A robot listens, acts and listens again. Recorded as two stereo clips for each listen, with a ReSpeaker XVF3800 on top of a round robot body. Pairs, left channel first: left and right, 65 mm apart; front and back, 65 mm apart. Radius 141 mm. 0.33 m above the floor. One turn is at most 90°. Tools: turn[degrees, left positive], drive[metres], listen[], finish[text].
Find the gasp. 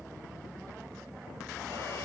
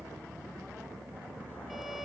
Action: listen[]
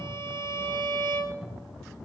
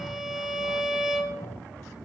Action: listen[]
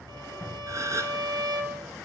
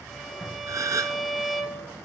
Thought: The gasp: 140° right.
Action: turn[-90]
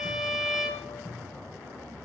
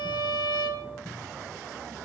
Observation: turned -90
Thought: Nothing new. It was at 50° right.
Action: turn[-50]
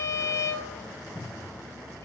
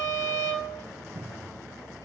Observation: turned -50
Action: finish[Facing where the gasp came from. I can't hear it now.]